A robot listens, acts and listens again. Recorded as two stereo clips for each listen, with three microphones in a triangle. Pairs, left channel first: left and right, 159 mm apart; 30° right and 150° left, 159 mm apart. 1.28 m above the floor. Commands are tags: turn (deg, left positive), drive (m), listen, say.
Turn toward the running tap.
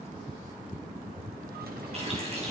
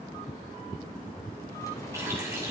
<turn deg="-140"/>
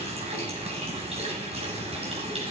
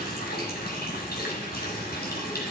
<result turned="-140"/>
<turn deg="-40"/>
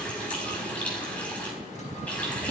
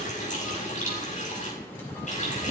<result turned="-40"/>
<turn deg="10"/>
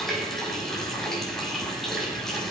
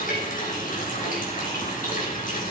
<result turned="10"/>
<say>Facing the running tap.</say>